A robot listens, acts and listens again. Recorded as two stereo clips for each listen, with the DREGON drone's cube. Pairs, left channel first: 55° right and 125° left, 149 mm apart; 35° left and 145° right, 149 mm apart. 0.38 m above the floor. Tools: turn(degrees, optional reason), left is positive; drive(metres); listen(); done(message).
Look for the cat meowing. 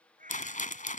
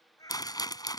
turn(degrees=100, reason="The cat meowing: 100° left.")
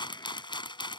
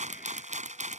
listen()
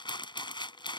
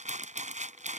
listen()
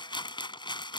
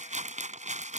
done("I heard a cat meowing from this way, but can't make it out now.")